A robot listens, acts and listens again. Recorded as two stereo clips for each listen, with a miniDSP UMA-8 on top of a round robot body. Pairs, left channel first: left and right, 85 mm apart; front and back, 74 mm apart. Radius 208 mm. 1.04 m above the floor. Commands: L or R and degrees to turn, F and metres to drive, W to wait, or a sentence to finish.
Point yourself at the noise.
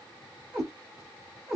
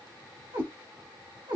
L180
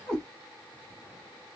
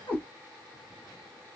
L10
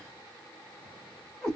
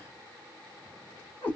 Found it: a cat meowing, straight ahead.